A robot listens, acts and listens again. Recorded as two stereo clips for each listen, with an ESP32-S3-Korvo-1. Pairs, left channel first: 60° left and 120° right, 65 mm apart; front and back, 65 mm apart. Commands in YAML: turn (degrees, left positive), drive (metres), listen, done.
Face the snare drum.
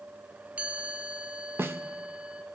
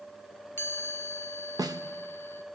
turn: -175
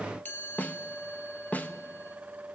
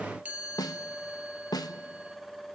done: "Facing the snare drum."